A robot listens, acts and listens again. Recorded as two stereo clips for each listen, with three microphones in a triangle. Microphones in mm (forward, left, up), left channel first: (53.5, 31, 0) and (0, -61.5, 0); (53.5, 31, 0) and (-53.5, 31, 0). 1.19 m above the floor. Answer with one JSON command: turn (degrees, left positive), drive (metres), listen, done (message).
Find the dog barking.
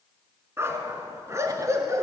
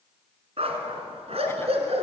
{"turn": 180}
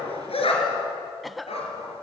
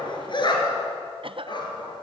{"turn": 40}
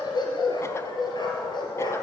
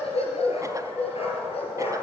{"turn": 15}
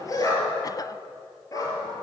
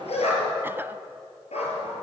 {"done": "Facing the dog barking, over 4 m away."}